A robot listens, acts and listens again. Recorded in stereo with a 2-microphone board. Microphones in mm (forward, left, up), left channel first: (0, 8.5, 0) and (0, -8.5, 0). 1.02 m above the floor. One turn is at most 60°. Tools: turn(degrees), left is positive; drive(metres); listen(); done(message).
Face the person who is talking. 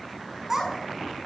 turn(degrees=-15)
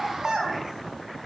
turn(degrees=-60)
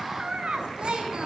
turn(degrees=-60)
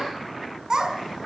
turn(degrees=-45)
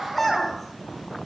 done("Facing the child speaking.")